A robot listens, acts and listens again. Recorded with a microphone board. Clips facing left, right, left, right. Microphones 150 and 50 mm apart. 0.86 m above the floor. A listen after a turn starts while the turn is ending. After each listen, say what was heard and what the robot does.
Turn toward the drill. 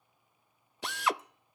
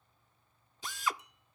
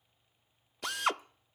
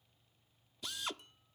Turn 90° left.
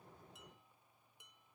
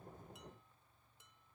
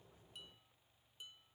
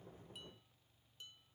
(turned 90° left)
Keep listening.
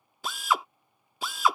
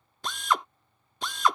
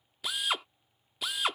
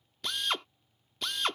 Facing the drill.